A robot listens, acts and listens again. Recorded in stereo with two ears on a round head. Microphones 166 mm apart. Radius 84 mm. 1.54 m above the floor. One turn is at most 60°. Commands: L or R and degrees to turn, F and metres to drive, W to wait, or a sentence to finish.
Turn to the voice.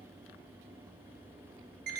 W
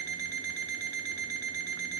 W
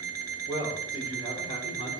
L25
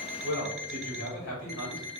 L60
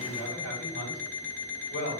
L60
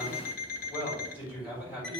L30
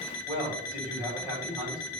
R10
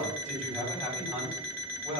Found it: a man speaking, straight ahead.